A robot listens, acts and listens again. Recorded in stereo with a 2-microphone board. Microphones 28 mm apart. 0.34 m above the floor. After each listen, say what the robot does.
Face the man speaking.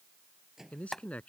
Turn 55° left.
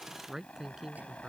Turn 20° right.
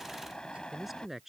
Facing the man speaking.